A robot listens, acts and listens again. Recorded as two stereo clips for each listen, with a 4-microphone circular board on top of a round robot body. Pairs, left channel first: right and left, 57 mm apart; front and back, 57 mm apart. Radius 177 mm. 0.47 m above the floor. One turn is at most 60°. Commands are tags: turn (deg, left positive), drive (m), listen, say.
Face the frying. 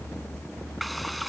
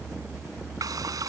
<turn deg="60"/>
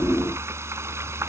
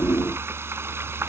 <turn deg="60"/>
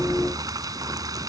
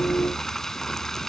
<turn deg="60"/>
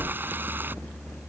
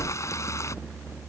<turn deg="35"/>
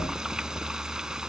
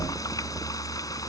<turn deg="10"/>
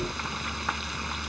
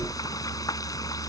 <say>Found it: frying, straight ahead.</say>